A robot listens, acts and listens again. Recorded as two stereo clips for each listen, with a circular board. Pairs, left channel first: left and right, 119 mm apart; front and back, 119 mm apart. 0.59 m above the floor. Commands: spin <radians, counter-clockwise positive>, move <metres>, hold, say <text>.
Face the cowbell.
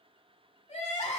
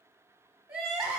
hold
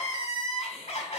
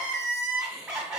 hold
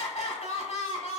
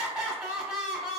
say I can't make out a cowbell to turn to.